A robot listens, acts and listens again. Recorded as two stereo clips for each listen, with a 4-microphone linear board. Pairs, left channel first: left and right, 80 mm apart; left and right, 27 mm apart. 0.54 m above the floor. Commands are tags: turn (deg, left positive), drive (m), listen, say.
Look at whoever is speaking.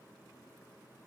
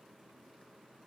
<listen/>
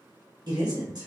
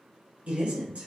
<turn deg="-65"/>
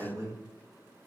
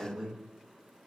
<turn deg="-35"/>
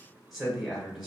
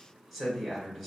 <say>Facing the man speaking.</say>